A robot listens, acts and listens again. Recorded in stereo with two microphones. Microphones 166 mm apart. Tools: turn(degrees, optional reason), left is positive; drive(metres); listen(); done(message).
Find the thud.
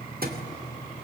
turn(degrees=-65, reason="The thud: about 65° right or 115° right.")
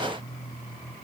listen()
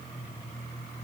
done("I heard a thud, but can't make it out now. It was about straight ahead or 50° right.")